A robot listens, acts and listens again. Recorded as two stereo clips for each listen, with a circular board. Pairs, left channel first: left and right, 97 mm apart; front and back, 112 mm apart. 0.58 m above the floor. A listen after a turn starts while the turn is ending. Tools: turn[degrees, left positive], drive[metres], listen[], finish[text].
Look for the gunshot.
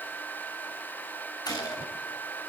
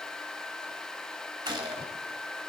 Thought: The gunshot: 130° left.
Action: turn[130]
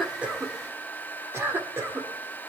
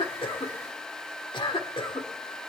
Action: finish[I heard a gunshot from this way, but can't make it out now.]